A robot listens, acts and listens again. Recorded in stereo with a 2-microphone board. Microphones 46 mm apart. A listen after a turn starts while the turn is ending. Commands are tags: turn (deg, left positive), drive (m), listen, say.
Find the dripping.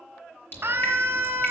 <turn deg="40"/>
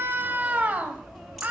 <say>Facing the dripping, over 4 m away.</say>